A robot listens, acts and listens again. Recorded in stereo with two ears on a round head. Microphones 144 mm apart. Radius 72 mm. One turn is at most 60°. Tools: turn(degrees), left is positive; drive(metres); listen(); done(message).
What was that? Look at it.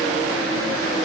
listen()
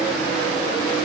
listen()
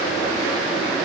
done("I can't make out anything to turn to.")